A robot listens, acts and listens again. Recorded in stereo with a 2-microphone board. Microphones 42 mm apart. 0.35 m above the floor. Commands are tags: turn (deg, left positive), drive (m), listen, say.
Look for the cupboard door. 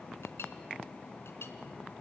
<listen/>
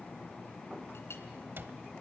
<turn deg="-55"/>
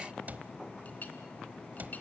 <turn deg="-50"/>
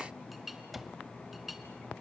<say>Found it: a cupboard door, straight ahead, 1 to 2 m away.</say>